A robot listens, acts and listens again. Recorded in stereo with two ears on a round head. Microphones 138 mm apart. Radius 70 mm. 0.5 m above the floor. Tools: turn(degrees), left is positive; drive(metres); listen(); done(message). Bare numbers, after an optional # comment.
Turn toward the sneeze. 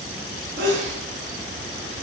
turn(-90)
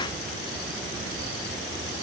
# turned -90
done("I heard a sneeze from this way, but can't make it out now.")